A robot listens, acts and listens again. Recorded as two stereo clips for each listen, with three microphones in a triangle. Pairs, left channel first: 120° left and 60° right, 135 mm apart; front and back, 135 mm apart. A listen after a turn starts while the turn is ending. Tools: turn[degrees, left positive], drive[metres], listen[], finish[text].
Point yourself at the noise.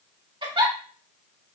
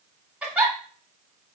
Thought: The giggle: 100° right.
Action: turn[-100]
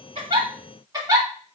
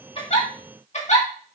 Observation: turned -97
Action: finish[Facing the giggle, 1 to 2 m away.]